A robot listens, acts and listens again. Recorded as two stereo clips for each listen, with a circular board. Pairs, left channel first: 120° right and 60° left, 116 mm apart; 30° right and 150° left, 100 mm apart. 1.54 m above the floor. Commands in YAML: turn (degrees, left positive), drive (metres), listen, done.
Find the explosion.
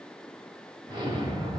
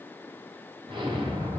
turn: 120
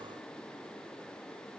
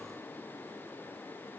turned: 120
done: "Facing where the explosion came from. I can't hear it now."